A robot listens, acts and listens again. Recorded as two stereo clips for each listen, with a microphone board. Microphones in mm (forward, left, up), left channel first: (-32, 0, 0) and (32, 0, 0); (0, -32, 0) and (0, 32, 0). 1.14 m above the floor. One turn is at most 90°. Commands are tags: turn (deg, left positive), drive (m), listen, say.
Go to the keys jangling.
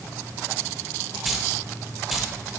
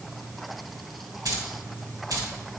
<turn deg="90"/>
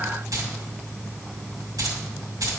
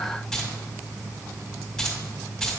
<turn deg="-10"/>
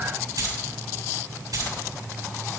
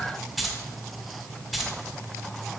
<drive m="1.0"/>
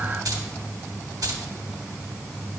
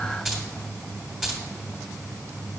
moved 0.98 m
<drive m="1.0"/>
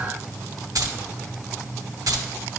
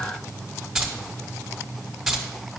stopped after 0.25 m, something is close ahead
<turn deg="10"/>
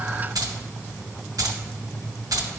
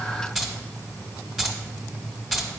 <say>I am next to the keys jangling.</say>